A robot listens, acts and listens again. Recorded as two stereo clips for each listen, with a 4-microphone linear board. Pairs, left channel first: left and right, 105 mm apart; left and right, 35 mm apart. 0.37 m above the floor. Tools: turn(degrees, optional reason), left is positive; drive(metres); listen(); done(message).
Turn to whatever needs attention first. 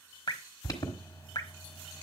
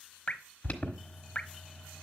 turn(degrees=35, reason="The alarm: about 35° left or 145° left.")
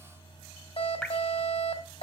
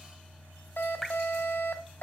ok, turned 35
turn(degrees=105, reason="So it is at 105° left.")
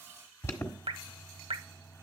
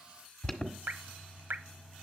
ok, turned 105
turn(degrees=25, reason="The alarm is now 25° left.")
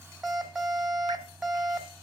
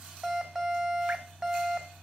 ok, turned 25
turn(degrees=-10, reason="The alarm is now 10° right.")
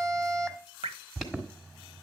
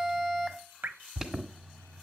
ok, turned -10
done("Found it: an alarm, straight ahead, 1 to 2 m away.")